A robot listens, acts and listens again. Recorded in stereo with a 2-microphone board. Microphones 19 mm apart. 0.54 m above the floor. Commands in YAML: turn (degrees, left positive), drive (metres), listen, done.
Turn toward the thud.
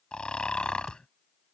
turn: -35
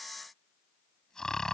listen: true
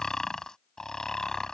done: "I heard a thud, but can't make it out now. It was about straight ahead or 110° right."